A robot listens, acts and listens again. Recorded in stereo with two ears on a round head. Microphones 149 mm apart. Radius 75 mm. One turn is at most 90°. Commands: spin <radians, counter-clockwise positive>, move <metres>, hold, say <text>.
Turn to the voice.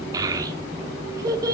spin -0.35
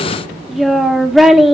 say Facing the child speaking, under 1 m away.